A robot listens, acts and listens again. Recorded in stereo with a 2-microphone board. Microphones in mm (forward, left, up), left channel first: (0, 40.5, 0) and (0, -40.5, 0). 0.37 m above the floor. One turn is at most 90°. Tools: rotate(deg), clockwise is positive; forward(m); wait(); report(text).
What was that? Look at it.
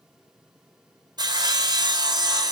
rotate(60)
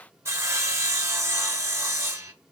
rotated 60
rotate(40)
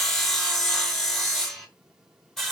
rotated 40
report("Found it: sawing, straight ahead, 2 to 4 m away.")